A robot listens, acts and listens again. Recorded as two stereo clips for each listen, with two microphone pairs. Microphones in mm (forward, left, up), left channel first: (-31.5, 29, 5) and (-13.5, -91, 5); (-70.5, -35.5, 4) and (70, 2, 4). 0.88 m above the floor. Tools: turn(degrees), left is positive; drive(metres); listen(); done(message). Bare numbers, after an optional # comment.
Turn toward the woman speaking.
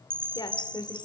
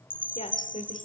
# The woman speaking: 160° left.
turn(160)
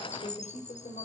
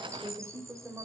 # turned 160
# The woman speaking is now 85° left.
turn(85)
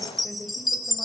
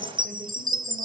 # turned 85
listen()
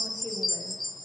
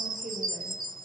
listen()
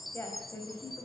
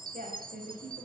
# The woman speaking is now 30° left.
turn(30)
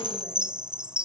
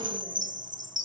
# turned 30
listen()
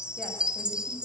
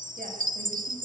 listen()
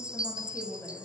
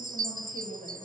# The woman speaking is now 20° left.
turn(20)
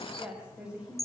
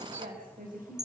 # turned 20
done("Found it: a woman speaking, straight ahead.")